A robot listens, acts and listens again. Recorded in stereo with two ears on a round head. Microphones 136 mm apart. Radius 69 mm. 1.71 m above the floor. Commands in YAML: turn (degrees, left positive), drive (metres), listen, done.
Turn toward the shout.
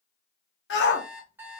turn: 90
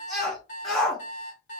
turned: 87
done: "Found it: a shout, straight ahead."